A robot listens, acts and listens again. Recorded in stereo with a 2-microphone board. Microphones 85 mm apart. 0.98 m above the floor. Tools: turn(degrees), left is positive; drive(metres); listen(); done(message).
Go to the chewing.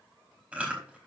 turn(degrees=-30)
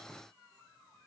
listen()
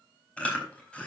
turn(degrees=15)
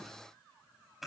drive(metres=1.0)
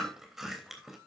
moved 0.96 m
drive(metres=1.0)
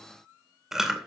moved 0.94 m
drive(metres=1.0)
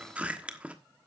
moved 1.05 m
turn(degrees=-15)
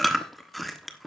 drive(metres=1.0)
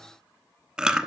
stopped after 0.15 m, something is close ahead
turn(degrees=-10)
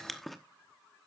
done("I am next to the chewing.")